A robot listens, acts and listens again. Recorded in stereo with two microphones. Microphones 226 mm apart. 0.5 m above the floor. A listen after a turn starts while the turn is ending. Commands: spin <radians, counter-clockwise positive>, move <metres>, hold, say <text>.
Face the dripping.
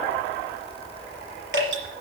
spin -1.05
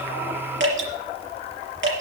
spin -1.05
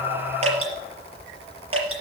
spin -0.44
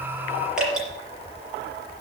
say Found it: dripping, straight ahead, over 4 m away.